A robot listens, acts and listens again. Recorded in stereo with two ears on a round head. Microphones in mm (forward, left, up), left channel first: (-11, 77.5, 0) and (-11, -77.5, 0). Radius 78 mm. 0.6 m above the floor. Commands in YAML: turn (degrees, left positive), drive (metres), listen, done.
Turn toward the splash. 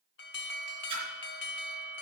turn: -30
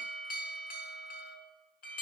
listen: true
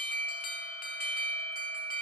done: "I heard a splash, but can't make it out now. It was about straight ahead or 120° right."